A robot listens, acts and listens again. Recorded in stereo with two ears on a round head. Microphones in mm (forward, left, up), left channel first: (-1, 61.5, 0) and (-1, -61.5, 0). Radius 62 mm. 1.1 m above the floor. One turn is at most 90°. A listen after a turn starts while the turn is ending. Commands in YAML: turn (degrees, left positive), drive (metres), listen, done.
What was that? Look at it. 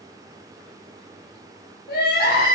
turn: 90
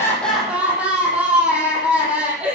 turn: -10
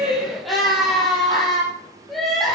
done: "Found it: crying, straight ahead."